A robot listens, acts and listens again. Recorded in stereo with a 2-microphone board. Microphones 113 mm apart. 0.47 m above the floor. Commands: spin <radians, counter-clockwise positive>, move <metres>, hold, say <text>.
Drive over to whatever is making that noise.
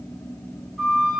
spin 0.52
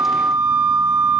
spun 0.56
spin -0.52
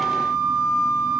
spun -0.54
move 1.0
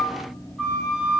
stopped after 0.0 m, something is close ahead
say Blocked. The flute is further on, straight ahead.